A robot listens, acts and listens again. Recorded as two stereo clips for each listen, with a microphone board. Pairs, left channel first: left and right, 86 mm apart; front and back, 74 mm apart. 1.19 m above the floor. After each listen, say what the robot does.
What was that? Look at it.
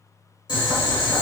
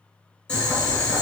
Turn 75° left.
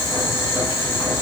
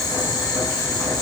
Turn 30° left.
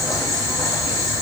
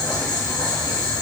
Found it: boiling, straight ahead.